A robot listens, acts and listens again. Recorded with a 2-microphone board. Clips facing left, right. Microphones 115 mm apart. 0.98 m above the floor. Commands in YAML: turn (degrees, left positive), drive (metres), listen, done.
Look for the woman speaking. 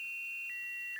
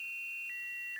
listen: true
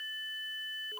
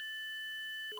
listen: true
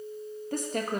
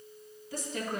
turn: 50
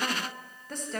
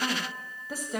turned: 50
turn: -10
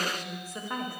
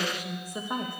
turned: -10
turn: -20
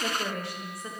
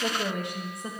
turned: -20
turn: -30
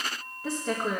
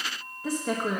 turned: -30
done: "Found it: a woman speaking, straight ahead, 1 to 2 m away."